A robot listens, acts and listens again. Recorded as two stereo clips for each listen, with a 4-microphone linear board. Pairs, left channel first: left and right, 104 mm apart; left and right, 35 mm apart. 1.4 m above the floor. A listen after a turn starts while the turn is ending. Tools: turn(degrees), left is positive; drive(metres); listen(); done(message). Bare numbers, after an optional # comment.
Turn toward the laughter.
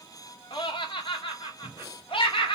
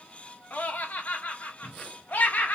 # The laughter: about 55° left or 125° left.
turn(55)
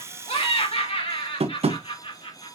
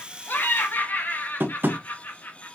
# So it is at 65° left.
turn(65)
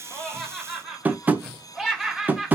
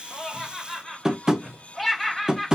done("Facing the laughter, over 4 m away.")